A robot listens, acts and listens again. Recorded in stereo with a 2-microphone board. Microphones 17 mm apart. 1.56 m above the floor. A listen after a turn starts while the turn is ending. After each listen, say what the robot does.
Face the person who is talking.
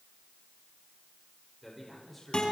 Turn 30° left.
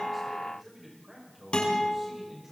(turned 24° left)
Turn 15° right.
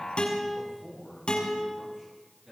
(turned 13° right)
Facing the man speaking, over 4 m away.